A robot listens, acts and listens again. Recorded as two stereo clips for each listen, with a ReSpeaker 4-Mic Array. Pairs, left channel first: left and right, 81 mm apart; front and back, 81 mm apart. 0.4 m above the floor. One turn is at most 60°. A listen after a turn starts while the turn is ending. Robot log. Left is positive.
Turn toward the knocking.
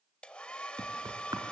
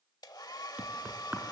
note: The knocking: 110° right.
cmd yaw -60
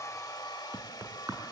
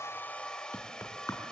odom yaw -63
note: The knocking is now 45° right.
cmd yaw -45
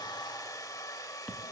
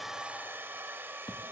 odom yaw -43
end: Found it: knocking, straight ahead.